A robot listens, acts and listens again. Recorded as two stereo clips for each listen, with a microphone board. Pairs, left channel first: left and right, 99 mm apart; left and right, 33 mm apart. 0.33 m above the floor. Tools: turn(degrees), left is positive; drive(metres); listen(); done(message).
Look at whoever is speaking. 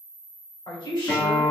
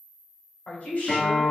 turn(degrees=50)
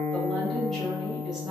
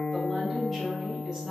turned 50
listen()
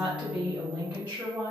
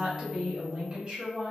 turn(degrees=-25)
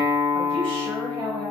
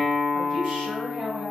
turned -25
turn(degrees=-25)
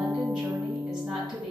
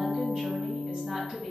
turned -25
turn(degrees=-15)
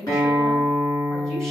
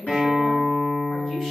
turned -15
done("Found it: a woman speaking, straight ahead.")